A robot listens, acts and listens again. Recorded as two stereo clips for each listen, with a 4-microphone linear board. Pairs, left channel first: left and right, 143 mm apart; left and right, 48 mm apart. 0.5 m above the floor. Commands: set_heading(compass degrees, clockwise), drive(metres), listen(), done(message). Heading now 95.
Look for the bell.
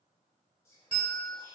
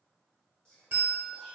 set_heading(135)
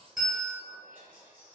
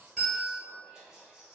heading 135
done("Facing the bell.")